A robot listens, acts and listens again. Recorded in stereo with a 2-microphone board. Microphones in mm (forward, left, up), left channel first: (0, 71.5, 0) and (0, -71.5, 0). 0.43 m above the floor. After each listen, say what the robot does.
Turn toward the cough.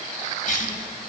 Turn 65° left.
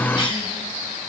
Turn 40° left.
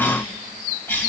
Turn 15° left.
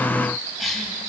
Facing the cough, 2 to 4 m away.